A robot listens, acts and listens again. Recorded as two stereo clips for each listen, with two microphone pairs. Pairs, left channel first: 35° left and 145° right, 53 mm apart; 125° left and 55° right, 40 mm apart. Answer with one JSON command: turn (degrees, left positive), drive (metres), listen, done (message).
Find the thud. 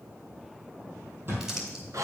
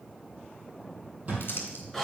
{"turn": -100}
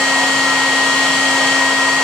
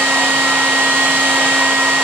{"done": "Facing where the thud came from. I can't hear it now."}